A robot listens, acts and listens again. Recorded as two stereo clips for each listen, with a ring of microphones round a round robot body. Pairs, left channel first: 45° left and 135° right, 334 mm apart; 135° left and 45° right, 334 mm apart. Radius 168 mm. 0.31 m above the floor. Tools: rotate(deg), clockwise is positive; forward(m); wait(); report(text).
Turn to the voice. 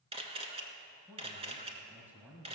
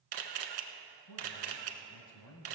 rotate(-140)
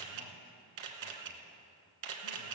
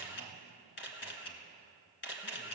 wait()
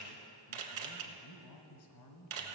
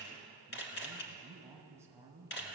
rotate(-35)
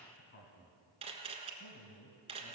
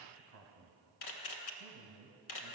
report("Found it: a man speaking, straight ahead.")